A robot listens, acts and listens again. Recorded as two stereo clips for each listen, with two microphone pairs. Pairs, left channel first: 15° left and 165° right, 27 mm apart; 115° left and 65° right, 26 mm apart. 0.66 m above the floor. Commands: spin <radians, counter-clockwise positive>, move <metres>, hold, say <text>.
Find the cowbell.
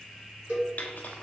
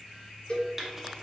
spin 2.97
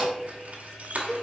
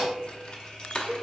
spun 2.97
spin -0.52
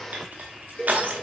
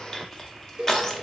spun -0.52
say Found it: a cowbell, straight ahead.